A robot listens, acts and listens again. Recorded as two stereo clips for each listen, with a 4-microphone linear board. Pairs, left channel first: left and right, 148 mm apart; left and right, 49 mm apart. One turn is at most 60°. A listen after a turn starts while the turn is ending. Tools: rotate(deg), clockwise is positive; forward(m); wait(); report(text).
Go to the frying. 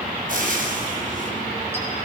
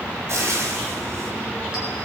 rotate(60)
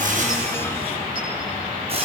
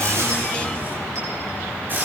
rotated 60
wait()
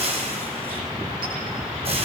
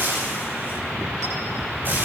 rotate(45)
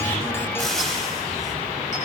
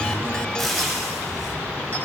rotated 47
forward(1.0)
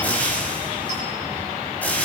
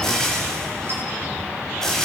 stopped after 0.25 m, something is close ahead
rotate(-10)
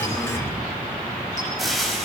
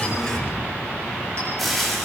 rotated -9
report("Something is in my way. I am facing the frying but have not reached it.")